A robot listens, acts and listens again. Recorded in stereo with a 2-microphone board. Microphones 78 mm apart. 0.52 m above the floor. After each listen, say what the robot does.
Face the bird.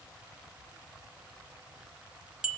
Keep listening.
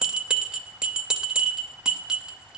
Keep listening.
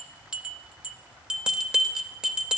I can't make out a bird to turn to.